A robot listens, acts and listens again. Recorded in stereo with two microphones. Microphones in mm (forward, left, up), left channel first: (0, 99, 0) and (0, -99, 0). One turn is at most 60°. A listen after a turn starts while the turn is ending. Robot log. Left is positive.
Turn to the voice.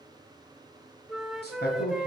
note: The man speaking: about 55° left or 125° left.
cmd yaw +55
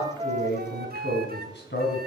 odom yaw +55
note: So it is at 65° left.
cmd yaw +60
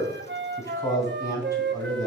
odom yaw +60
note: The man speaking is now 15° left.
cmd yaw +15
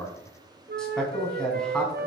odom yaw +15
end: Facing the man speaking, 2 to 4 m away.